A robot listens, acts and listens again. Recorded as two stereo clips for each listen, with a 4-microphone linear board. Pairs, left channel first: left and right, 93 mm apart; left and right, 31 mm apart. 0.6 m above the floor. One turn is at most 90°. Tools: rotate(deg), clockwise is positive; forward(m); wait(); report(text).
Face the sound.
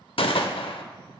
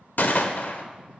rotate(-70)
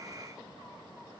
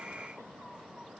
wait()
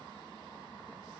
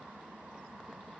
report("I heard a gunshot, but can't make it out now. It was about straight ahead or 40° left.")